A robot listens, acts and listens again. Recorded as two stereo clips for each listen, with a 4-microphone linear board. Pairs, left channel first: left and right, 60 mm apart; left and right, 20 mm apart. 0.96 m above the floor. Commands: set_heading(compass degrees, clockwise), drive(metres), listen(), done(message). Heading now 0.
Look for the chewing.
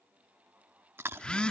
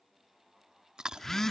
set_heading(45)
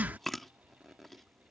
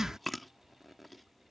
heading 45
done("Facing the chewing.")